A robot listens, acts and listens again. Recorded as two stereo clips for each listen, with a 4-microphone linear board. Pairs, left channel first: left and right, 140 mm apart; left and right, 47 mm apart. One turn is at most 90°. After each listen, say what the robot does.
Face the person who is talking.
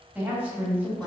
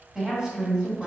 Turn 30° right.
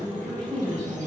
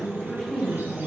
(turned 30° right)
Turn 15° left.
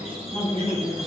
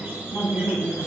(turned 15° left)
Facing the woman speaking, 1 to 2 m away.